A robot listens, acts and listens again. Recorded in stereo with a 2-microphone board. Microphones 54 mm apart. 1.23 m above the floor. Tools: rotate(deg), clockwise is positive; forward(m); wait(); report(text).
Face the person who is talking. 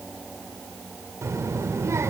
rotate(65)
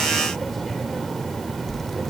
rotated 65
report("Facing the child speaking.")